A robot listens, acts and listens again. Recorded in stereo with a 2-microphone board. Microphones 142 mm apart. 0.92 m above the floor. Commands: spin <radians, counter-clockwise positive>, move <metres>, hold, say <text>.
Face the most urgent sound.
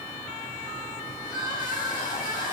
spin 0.52
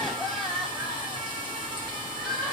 say Facing the crying, over 4 m away.